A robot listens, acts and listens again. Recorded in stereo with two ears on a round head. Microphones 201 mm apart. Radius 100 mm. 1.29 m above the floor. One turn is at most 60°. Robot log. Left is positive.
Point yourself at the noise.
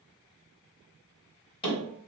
note: The hammering: about 20° left or 160° left.
cmd yaw +20
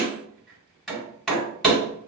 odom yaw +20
end: Found it: hammering, straight ahead, 1 to 2 m away.